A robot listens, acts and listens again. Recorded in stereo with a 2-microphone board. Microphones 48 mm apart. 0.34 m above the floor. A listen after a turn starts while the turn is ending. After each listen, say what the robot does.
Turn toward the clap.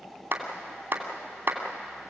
Turn 45° right.
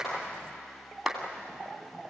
Facing the clap.